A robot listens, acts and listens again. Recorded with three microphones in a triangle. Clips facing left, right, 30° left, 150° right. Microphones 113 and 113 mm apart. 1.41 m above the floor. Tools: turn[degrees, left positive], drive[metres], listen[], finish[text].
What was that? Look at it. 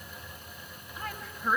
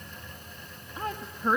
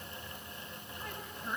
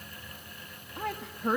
Thought: The woman speaking: 155° right.
Action: turn[-155]
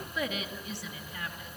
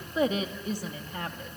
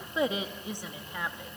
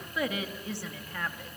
Thought: The woman speaking is now 50° right.
Action: turn[-50]
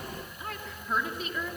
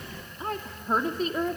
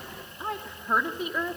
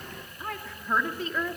Thought: The woman speaking is now 45° right.
Action: turn[-45]
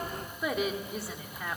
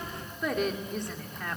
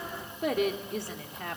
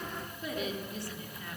Action: finish[Facing the woman speaking, 2 to 4 m away.]